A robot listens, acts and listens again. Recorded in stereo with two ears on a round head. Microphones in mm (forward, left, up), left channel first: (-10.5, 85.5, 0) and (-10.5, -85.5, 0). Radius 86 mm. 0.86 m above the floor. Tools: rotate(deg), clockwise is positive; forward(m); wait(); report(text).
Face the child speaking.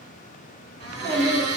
rotate(40)
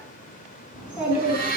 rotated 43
report("Facing the child speaking, 2 to 4 m away.")